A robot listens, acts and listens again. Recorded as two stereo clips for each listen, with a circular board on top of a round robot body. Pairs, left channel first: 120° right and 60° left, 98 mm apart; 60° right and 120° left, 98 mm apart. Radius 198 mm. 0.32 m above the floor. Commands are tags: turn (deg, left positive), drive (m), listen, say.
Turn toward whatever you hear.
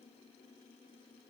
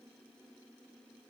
<listen/>
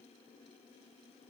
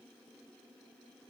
<listen/>
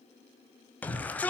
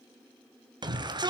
<turn deg="165"/>
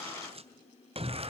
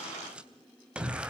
<turn deg="40"/>
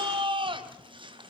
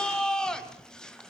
<turn deg="25"/>
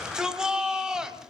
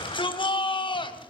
<turn deg="-25"/>
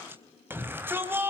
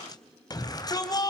<turn deg="-10"/>
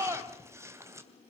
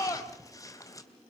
<say>Found it: a shout, straight ahead.</say>